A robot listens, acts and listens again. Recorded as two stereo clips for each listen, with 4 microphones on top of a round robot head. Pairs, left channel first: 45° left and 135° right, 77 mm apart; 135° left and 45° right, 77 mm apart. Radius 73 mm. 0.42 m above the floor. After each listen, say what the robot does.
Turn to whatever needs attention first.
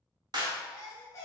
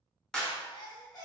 Turn 100° left.
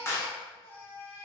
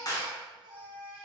Turn 15° right.
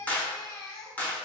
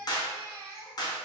Facing the baby crying.